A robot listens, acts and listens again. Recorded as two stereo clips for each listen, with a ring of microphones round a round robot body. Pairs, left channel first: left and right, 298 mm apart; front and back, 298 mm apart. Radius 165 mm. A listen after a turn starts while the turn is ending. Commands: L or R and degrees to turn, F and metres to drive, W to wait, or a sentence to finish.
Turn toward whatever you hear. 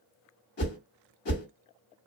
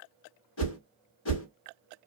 L40
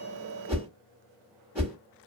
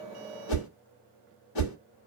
Facing the whoosh, 1 to 2 m away.